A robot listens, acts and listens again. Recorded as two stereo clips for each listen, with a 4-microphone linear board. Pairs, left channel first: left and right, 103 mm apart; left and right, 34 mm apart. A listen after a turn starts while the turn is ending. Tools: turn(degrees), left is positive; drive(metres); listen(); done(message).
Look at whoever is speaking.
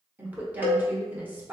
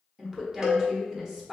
turn(degrees=-15)
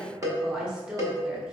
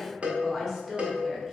done("Facing the woman speaking, 1 to 2 m away.")